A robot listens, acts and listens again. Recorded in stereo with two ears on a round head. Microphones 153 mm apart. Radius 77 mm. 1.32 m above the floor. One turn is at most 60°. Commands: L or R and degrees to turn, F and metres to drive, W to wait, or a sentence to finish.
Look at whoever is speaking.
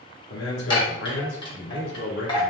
L60
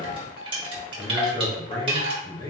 L20
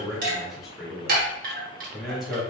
Found it: a man speaking, straight ahead.